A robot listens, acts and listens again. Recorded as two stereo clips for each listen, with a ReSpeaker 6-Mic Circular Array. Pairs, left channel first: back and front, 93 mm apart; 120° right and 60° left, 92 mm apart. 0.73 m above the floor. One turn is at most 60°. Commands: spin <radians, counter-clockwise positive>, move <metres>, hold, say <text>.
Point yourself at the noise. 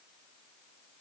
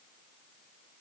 hold
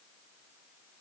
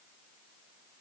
hold
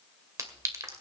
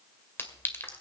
spin -0.96
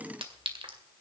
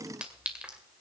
spin -0.35
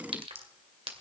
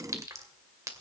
say Found it: a clink, straight ahead, 2 to 4 m away.